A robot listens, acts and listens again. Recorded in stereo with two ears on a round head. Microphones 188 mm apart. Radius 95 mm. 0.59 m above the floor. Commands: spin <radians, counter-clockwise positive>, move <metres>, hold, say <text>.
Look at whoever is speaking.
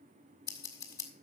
hold
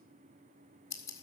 hold
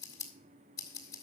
say I can't make out anyone speaking to turn to.